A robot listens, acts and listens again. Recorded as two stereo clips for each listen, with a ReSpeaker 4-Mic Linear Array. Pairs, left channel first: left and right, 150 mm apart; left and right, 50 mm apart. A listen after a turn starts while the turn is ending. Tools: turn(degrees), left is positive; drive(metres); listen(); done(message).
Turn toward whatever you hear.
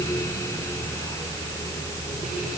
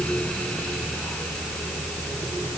listen()
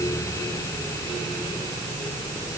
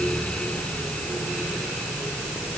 listen()
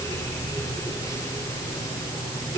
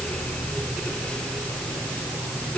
done("I can't make out anything.")